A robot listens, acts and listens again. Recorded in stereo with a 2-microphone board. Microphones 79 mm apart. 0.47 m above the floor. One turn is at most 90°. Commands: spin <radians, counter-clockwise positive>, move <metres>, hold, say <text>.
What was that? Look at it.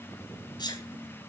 spin 1.13
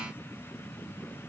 hold
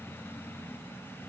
say I heard a sneeze, but can't make it out now. It was about straight ahead or 50° left.